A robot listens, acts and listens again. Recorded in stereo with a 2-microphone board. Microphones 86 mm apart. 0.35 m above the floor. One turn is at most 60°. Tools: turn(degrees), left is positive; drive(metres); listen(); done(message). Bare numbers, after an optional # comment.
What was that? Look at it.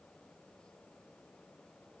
listen()
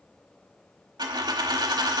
# The dropped coin: about 60° right or 120° right.
turn(-60)
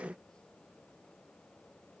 listen()
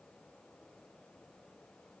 done("I heard a dropped coin, but can't make it out now. It was about straight ahead or 60° right.")